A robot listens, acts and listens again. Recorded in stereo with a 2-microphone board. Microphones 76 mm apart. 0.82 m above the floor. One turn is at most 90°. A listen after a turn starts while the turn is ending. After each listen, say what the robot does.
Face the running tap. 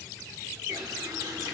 Turn 55° right.
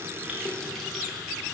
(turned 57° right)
Found it: a running tap, straight ahead.